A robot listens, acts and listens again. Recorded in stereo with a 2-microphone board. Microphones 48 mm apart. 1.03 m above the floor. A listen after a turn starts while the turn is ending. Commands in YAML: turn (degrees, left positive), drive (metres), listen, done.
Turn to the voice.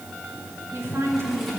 turn: -75
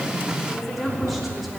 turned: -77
done: "Found it: a woman speaking, straight ahead, 2 to 4 m away."